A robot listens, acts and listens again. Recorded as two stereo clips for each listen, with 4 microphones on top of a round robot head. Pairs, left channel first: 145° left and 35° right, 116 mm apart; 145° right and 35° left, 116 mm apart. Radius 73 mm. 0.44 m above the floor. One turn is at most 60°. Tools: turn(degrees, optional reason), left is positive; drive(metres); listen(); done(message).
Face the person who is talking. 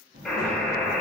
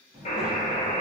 turn(degrees=-45, reason="The child speaking: 45° right.")
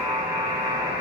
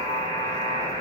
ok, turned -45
listen()
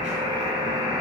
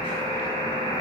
listen()
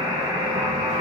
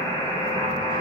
done("I heard a child speaking from this way, but can't make it out now.")